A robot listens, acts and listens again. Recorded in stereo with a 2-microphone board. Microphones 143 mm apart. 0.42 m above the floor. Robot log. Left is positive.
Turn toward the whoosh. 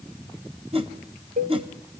note: The whoosh: about 40° right or 140° right.
cmd yaw -40
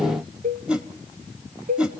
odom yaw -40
end: Facing the whoosh.